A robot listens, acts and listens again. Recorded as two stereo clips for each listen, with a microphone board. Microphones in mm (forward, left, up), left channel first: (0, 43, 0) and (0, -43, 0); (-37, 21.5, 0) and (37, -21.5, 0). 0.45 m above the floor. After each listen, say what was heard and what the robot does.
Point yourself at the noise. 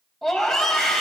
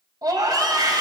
Facing the scream, 2 to 4 m away.